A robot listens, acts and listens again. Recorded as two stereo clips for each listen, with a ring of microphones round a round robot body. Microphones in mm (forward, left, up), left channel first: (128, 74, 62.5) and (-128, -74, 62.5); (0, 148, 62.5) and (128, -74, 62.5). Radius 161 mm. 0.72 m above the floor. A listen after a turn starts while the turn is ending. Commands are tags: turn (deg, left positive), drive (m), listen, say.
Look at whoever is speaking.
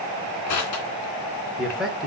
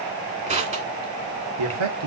<turn deg="-60"/>
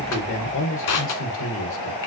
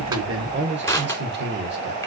<turn deg="-15"/>
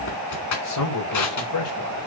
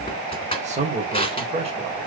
<say>Facing the man speaking, 2 to 4 m away.</say>